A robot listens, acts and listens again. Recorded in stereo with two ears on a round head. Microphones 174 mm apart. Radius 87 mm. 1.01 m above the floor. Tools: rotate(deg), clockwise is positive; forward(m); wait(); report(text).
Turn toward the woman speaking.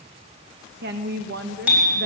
rotate(55)
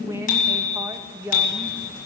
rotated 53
rotate(15)
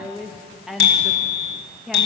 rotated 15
report("Facing the woman speaking.")